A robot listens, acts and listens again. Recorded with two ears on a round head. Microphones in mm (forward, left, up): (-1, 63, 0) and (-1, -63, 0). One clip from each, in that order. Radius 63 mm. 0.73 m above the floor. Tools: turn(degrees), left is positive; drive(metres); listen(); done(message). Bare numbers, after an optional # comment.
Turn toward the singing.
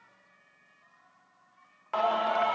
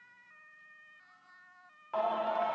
# The singing: about 45° left or 135° left.
turn(45)
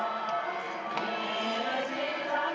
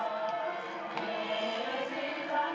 done("Facing the singing.")